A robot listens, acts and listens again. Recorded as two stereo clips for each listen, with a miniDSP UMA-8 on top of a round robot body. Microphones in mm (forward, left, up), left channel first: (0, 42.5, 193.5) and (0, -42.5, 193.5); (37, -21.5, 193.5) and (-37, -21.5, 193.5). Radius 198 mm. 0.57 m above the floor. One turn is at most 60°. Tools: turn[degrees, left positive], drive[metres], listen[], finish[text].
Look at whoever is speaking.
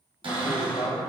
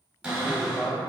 Thought: The man speaking: 70° left.
Action: turn[60]
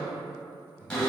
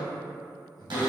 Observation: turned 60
Thought: The man speaking is now 20° right.
Action: turn[-20]
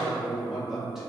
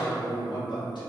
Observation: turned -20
Action: finish[Facing the man speaking.]